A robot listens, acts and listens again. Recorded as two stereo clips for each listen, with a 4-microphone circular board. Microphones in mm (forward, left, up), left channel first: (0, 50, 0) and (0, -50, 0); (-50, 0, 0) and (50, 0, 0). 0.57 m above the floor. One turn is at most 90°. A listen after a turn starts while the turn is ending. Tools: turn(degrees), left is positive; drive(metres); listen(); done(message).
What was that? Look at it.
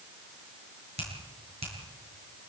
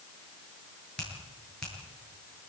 turn(degrees=-90)
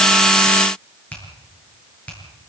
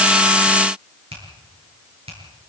turn(degrees=15)
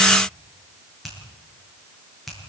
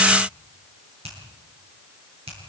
done("Found it: a finger snap, straight ahead, over 4 m away.")